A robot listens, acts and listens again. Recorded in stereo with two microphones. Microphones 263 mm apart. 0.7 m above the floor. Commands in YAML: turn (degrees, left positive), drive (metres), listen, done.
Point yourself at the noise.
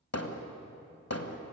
turn: 65
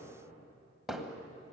done: "Found it: hammering, straight ahead."